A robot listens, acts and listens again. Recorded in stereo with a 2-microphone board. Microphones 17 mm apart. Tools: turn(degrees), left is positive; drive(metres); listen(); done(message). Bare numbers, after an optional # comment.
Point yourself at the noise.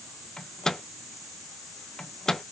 # The microwave: about 45° left or 135° left.
turn(45)
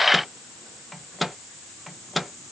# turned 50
done("Found it: a microwave, straight ahead, under 1 m away.")